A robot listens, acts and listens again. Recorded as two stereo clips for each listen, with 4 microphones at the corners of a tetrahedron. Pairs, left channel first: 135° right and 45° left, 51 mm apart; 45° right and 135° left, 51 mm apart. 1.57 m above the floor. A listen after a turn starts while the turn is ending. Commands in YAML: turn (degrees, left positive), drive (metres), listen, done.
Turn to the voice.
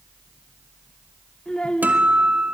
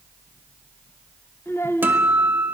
turn: -65
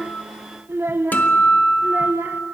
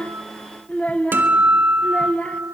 turn: 15
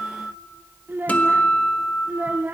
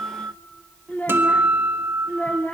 done: "Facing the child speaking."